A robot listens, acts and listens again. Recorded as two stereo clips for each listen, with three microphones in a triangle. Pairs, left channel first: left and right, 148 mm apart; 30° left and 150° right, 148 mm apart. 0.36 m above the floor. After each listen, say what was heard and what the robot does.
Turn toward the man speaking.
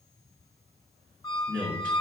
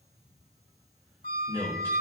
The man speaking: 105° left. Turn 105° left.
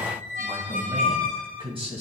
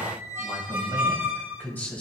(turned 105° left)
The man speaking is now 50° right. Turn 50° right.
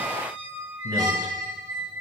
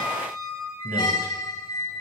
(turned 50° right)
The man speaking is now 30° right. Turn 30° right.
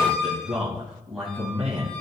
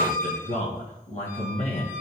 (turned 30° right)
Found it: a man speaking, straight ahead.